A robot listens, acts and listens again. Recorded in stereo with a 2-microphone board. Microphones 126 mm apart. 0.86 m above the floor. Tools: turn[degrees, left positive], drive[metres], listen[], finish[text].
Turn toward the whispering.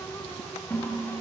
Action: listen[]
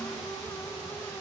Action: listen[]
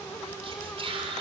Thought: The whispering: about 45° right or 135° right.
Action: turn[-45]
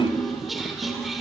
Action: finish[Found it: whispering, straight ahead.]